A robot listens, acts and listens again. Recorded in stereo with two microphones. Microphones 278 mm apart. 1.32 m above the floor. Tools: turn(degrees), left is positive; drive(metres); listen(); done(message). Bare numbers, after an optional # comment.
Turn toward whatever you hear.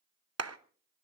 # The clap: about 60° right or 120° right.
turn(-60)
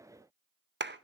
# So it is at 45° right.
turn(-45)
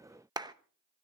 # The clap is now 15° right.
turn(-15)
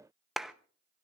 done("Found it: a clap, straight ahead, under 1 m away.")